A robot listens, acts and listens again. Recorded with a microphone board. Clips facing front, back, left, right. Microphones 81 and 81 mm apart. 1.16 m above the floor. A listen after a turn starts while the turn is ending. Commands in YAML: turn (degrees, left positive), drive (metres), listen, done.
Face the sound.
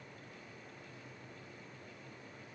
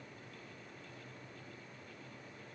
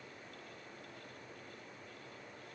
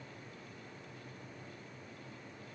listen: true
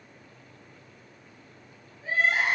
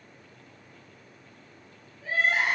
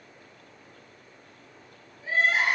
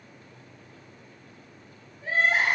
turn: -65
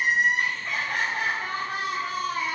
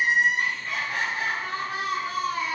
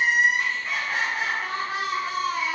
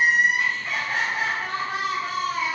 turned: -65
done: "Found it: crying, straight ahead, 1 to 2 m away."